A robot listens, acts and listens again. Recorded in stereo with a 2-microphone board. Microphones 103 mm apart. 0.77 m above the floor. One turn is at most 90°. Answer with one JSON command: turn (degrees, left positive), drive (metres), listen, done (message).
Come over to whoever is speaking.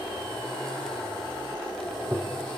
{"listen": true}
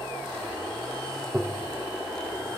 {"listen": true}
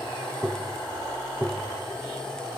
{"done": "I can't make out anyone speaking to turn to."}